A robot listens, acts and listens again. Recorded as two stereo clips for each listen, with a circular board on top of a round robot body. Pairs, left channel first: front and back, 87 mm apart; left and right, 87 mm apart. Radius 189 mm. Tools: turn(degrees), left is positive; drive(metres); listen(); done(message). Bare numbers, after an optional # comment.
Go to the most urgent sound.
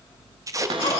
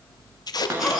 drive(1.0)
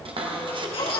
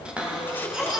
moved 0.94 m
# The baby crying is now 10° right.
turn(-10)
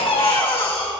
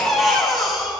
drive(1.0)
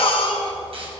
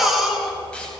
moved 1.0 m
drive(1.0)
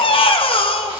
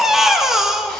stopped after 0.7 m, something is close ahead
done("Arrived at the baby crying, straight ahead.")